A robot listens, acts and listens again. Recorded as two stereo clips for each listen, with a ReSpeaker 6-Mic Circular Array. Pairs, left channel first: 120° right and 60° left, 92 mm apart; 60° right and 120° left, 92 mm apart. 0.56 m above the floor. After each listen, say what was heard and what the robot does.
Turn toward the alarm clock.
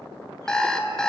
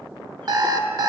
The alarm clock: 160° left. Turn 160° left.
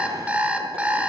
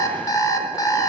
The alarm clock is now 15° right. Turn 15° right.
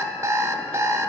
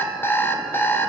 Facing the alarm clock, 1 to 2 m away.